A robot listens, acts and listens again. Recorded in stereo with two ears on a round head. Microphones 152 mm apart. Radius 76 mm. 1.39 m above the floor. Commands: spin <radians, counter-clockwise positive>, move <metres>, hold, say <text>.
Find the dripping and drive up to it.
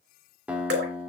spin -1.22
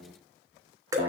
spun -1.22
spin -0.44
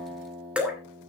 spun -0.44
spin -0.17
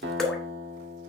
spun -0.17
move 1.0
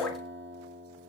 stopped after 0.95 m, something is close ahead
spin 0.26
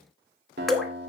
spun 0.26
say Arrived at the dripping, straight ahead.